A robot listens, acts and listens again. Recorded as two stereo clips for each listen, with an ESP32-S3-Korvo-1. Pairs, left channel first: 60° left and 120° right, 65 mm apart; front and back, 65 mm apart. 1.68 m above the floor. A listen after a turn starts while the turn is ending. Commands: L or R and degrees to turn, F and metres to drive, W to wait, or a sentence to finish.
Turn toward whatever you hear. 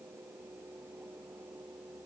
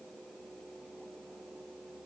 W
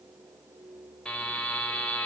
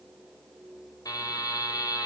R15
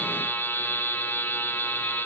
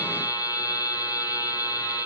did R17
Found it: a buzzer, straight ahead.